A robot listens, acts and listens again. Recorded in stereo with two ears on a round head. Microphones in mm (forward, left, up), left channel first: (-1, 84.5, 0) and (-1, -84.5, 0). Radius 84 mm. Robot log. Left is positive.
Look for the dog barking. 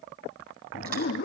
note: The dog barking: about 50° left or 130° left.
cmd yaw +50
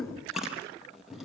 end: Found it: a dog barking, straight ahead.